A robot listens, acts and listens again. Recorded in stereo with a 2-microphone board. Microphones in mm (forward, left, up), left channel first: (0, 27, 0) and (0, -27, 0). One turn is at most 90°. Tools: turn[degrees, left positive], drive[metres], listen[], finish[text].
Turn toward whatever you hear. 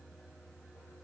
Action: listen[]
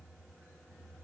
Action: listen[]
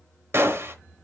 Thought: The gunshot: about 55° right or 125° right.
Action: turn[-55]
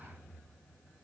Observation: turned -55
Action: listen[]
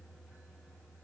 Action: finish[I heard a gunshot, but can't make it out now. It was about straight ahead or 70° right.]